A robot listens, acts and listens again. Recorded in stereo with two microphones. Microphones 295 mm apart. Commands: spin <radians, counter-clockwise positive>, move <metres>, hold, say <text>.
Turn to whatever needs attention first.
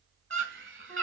spin -0.79
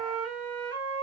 hold
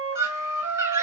spin -0.17
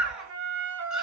say Facing the scream, 1 to 2 m away.